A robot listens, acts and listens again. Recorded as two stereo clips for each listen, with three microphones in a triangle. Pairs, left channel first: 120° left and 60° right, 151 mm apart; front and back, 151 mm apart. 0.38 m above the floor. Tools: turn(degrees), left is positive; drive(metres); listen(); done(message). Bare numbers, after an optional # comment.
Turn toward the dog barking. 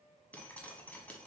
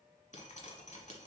listen()
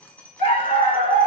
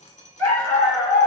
# The dog barking: 75° left.
turn(75)
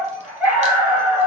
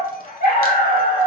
# The dog barking is now 20° left.
turn(20)
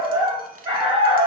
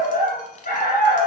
done("Found it: a dog barking, straight ahead, 1 to 2 m away.")